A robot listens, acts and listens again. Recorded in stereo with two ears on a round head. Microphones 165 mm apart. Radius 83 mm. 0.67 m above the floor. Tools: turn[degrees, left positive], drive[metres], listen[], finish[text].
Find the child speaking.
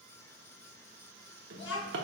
Thought: The child speaking: about 70° left or 110° left.
Action: turn[70]
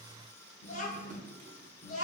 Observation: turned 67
Thought: So it is at 40° left.
Action: turn[40]
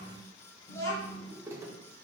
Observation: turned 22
Thought: The child speaking is now 15° left.
Action: turn[15]
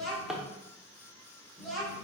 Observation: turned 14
Action: finish[Found it: a child speaking, straight ahead.]